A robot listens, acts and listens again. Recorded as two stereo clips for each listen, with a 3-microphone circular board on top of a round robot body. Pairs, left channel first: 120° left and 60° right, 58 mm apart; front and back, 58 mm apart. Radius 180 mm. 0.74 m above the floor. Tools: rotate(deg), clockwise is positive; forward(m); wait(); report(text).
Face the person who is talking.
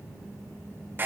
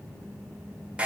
wait()
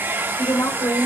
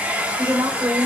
rotate(-130)
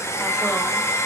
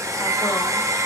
wait()
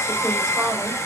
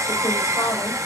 wait()
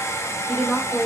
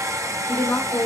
rotate(-35)
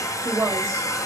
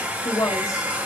rotate(10)
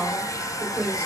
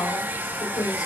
report("Found it: a woman speaking, straight ahead, 2 to 4 m away.")